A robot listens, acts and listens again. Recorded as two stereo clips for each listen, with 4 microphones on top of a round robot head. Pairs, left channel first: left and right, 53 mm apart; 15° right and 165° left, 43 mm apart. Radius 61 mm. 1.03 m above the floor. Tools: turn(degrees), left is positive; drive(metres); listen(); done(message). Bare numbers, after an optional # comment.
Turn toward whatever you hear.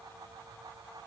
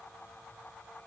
listen()
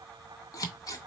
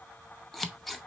# The scissors: 75° left.
turn(75)
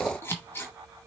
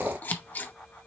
# The scissors is now 35° left.
turn(35)
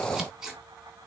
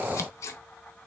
done("Facing the scissors, under 1 m away.")